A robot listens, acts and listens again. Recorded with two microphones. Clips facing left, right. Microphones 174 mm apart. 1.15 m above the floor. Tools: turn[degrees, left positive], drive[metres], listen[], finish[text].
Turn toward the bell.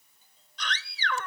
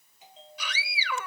Thought: The bell: about 70° right or 110° right.
Action: turn[-70]
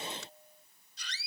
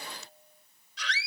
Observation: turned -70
Action: finish[Facing the bell.]